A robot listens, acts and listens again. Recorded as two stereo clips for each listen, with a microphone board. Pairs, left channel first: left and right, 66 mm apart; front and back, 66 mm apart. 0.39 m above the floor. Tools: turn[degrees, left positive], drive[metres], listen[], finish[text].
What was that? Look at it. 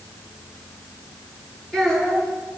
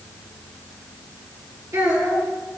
Thought: The child speaking: 170° left.
Action: turn[170]
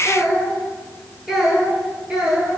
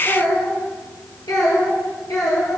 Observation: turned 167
Thought: The child speaking is now 15° right.
Action: turn[-15]
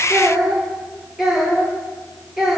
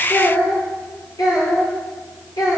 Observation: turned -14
Thought: The child speaking is now 10° right.
Action: turn[-10]
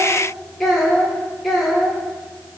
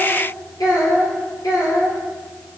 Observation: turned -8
Action: finish[Found it: a child speaking, straight ahead, over 4 m away.]